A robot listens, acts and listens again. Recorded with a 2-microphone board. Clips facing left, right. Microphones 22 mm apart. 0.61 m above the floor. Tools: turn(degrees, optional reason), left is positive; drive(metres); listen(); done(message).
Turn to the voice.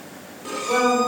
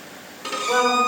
turn(degrees=-55, reason="The woman speaking: about 55° right or 125° right.")
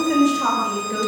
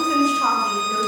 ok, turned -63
done("Facing the woman speaking, 2 to 4 m away.")